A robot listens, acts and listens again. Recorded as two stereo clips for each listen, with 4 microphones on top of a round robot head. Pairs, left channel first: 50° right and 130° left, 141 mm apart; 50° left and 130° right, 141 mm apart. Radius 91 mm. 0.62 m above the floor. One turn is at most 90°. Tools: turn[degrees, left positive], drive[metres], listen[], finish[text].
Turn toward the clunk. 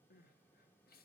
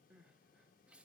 Action: listen[]
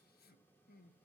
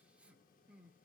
Action: listen[]
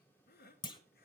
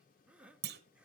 Thought: The clunk: 115° right.
Action: turn[-90]
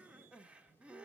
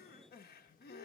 Thought: Nothing new. It was at 25° right.
Action: turn[-25]
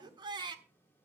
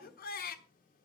Action: finish[Facing where the clunk came from. I can't hear it now.]